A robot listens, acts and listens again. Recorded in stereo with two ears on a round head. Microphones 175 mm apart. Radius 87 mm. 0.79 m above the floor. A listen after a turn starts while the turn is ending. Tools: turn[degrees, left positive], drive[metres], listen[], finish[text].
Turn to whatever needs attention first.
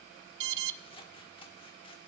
Thought: The alarm: about 65° right or 115° right.
Action: turn[-65]
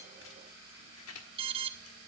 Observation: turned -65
Thought: So it is at 30° right.
Action: turn[-30]
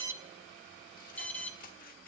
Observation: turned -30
Thought: The alarm is now 10° left.
Action: turn[10]
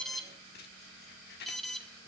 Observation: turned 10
Action: finish[Found it: an alarm, straight ahead.]